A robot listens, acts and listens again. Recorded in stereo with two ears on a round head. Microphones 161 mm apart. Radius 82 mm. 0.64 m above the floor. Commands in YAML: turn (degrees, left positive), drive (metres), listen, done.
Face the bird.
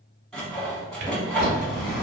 turn: 55
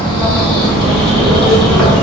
done: "Found it: a bird, straight ahead, 1 to 2 m away."